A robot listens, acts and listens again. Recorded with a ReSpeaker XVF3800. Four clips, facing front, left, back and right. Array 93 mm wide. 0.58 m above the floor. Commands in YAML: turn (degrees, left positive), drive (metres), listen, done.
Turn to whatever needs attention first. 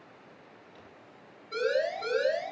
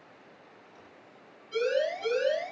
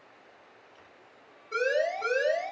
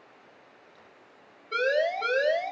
turn: -110
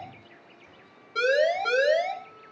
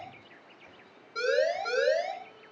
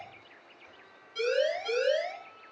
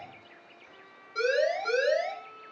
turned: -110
done: "Facing the siren, over 4 m away."